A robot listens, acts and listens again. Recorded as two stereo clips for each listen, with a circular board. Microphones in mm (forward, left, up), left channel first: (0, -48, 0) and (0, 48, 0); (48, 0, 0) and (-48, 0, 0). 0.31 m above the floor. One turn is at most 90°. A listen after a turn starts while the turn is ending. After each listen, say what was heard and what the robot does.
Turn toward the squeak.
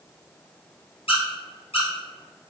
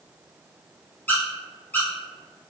The squeak: 70° right. Turn 70° right.
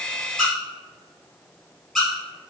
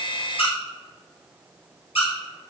Facing the squeak, 1 to 2 m away.